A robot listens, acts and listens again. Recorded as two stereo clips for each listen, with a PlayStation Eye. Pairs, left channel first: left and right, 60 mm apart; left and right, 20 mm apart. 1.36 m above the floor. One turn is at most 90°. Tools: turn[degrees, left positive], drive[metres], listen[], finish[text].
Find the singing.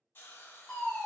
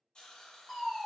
Action: listen[]
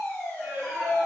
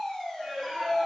Thought: The singing: about 25° right or 155° right.
Action: turn[-25]
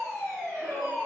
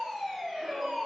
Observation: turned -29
Thought: So it is at 140° right.
Action: turn[-90]
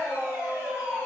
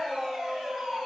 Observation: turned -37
Thought: The singing is now 115° right.
Action: turn[-90]
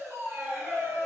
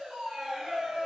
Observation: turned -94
Thought: The singing is now 30° right.
Action: turn[-30]
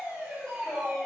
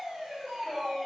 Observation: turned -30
Action: finish[Facing the singing.]